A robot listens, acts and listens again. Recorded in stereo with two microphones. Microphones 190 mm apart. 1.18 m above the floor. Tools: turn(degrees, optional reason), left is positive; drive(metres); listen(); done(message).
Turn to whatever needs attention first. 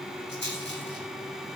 listen()
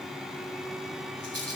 listen()
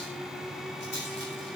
done("I can't make out anything urgent to turn to.")